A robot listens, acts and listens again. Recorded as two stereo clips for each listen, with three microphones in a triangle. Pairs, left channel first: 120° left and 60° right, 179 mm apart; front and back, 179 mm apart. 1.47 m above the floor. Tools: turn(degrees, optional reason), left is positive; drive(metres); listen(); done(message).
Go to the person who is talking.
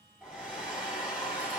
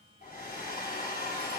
listen()
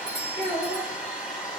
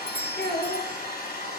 turn(degrees=-10, reason="The child speaking: 10° right.")
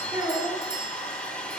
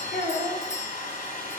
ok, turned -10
drive(metres=1.0)
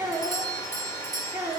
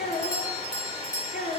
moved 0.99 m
turn(degrees=10, reason="The child speaking is now 10° left.")
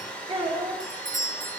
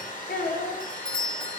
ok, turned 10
drive(metres=1.0)
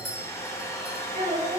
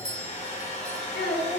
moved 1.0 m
turn(degrees=-15, reason="The child speaking is now 15° right.")
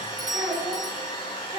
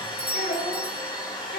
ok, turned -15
drive(metres=1.0)
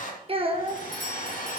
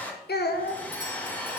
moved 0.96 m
drive(metres=1.0)
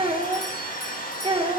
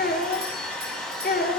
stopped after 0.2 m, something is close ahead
done("I am next to the child speaking.")